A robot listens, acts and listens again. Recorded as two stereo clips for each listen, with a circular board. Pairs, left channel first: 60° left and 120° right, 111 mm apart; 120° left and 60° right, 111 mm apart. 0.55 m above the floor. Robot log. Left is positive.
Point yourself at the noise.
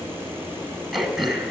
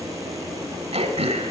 note: The throat clearing: 35° right.
cmd yaw -35
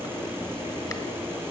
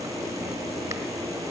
cmd idle
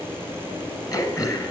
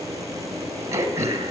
end: Facing the throat clearing.